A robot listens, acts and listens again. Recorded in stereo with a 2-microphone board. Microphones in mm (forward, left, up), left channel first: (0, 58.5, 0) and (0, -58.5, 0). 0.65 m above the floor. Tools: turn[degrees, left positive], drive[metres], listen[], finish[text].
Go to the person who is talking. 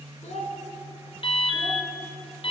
Action: turn[90]
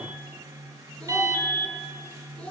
Thought: So it is at 10° left.
Action: turn[10]
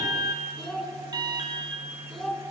Action: drive[1.0]
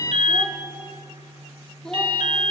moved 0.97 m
Action: drive[1.0]
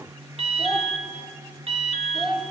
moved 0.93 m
Action: drive[1.0]
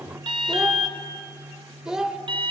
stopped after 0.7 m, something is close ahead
Action: finish[Arrived at the child speaking, straight ahead.]